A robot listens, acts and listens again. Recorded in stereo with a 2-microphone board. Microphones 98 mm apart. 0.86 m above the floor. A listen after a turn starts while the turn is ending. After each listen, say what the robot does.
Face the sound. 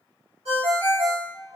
Turn 90° right.
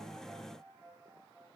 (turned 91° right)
Keep listening.
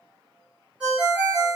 Turn 10° right.
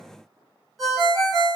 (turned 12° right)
Found it: a ringtone, straight ahead, 1 to 2 m away.